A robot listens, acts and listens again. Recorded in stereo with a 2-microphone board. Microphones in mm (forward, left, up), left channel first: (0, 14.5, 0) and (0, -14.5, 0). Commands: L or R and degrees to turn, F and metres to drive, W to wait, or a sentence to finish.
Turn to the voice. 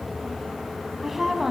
R30
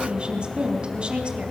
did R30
R140
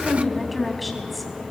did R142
Facing the woman speaking, 2 to 4 m away.